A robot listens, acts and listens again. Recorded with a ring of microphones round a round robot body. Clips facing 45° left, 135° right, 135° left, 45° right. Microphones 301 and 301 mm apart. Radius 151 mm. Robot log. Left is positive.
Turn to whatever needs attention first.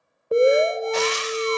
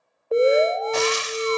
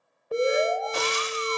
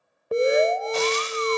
note: The alarm: 25° right.
cmd yaw -25
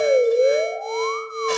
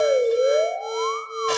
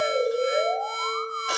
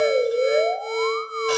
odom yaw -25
note: The alarm is now 10° right.
cmd yaw -10
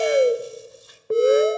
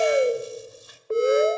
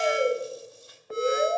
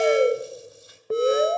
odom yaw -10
end: Found it: an alarm, straight ahead.